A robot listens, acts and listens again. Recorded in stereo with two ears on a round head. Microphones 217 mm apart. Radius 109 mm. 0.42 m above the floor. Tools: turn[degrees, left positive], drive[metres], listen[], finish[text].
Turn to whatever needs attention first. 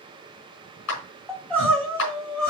Action: turn[30]
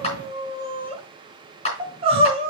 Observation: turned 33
Thought: So it is at 25° right.
Action: turn[-25]
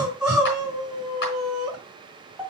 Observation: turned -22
Action: finish[Facing the crying.]